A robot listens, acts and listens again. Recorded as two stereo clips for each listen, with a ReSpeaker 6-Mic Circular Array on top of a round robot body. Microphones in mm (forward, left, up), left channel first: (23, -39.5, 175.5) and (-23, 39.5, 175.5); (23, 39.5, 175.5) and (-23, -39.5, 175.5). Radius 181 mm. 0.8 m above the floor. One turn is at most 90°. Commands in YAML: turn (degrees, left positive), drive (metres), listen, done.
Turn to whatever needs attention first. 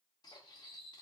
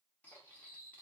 listen: true
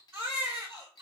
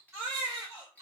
turn: 90
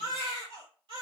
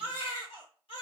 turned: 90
turn: 90
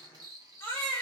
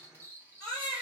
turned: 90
done: "Facing the baby crying."